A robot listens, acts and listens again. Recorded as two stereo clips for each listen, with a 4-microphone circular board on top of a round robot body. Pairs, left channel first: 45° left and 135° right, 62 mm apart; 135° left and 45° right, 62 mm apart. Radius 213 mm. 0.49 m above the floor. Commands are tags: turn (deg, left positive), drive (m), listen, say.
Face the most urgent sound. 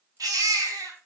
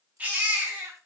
<turn deg="-110"/>
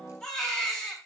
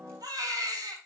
<turn deg="-30"/>
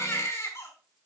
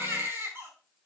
<turn deg="10"/>
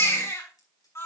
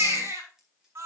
<say>Found it: a baby crying, straight ahead.</say>